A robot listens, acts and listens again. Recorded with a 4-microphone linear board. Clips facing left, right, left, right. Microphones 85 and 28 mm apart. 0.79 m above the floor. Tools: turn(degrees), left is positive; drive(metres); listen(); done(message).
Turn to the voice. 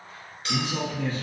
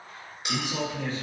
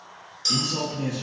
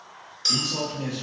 turn(degrees=-30)
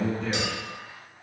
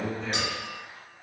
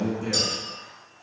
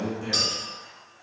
done("Found it: a man speaking, straight ahead, 1 to 2 m away.")